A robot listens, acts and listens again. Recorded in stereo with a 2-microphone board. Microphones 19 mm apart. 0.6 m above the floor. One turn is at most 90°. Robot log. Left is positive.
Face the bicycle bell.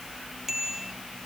note: The bicycle bell: about 20° right or 160° right.
cmd yaw -20
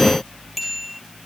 end: Facing the bicycle bell.